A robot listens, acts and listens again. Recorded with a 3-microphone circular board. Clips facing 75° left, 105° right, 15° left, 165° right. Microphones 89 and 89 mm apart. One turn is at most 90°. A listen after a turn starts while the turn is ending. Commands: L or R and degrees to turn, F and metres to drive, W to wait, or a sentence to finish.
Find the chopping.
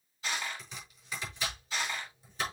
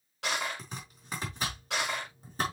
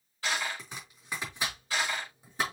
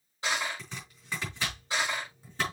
R60
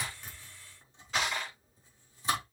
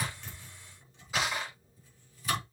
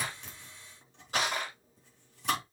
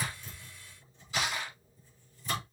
L15
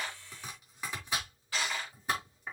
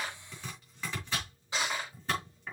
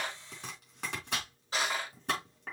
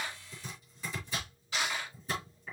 Facing the chopping, over 4 m away.